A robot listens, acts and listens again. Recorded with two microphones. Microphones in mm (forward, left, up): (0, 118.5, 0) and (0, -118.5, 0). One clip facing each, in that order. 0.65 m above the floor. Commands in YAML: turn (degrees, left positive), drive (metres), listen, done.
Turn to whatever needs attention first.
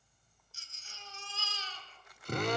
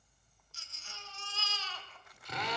turn: -70
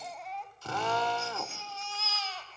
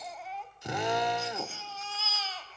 done: "Facing the baby crying."